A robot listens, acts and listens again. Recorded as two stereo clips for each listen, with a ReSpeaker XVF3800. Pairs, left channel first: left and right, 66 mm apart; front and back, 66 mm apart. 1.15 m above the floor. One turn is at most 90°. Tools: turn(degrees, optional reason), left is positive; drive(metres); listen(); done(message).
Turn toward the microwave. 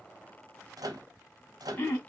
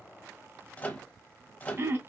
turn(degrees=-70, reason="The microwave: 70° right.")
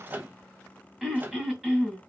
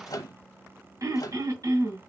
turn(degrees=-25, reason="The microwave is now 25° right.")
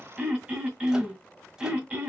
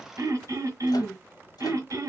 listen()
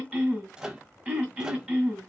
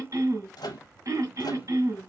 turn(degrees=-10, reason="The microwave is now 10° right.")
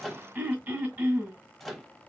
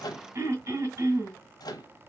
done("Found it: a microwave, straight ahead, under 1 m away.")